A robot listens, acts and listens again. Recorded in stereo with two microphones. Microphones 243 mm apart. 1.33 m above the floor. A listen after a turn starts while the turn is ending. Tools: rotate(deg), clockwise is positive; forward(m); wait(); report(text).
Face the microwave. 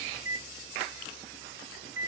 rotate(65)
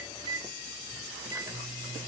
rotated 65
rotate(15)
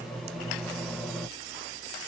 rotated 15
report("Facing the microwave.")